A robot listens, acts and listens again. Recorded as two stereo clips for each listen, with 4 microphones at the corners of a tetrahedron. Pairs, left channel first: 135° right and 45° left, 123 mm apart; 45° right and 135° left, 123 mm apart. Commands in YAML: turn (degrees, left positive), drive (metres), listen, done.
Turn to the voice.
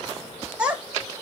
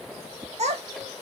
turn: 125
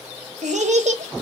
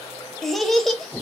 turn: 45
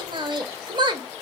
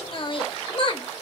done: "Found it: a child speaking, straight ahead."